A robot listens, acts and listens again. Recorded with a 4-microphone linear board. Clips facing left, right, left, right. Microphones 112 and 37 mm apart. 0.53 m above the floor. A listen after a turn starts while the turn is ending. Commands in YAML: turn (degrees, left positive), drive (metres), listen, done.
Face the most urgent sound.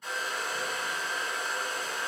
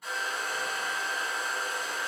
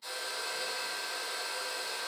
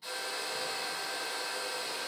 listen: true
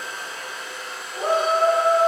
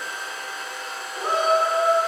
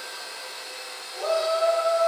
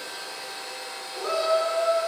turn: 50
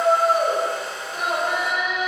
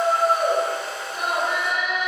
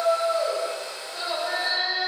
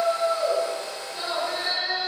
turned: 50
turn: 65
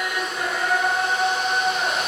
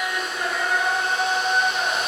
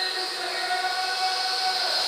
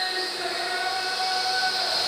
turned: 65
done: "Found it: a shout, straight ahead, 1 to 2 m away."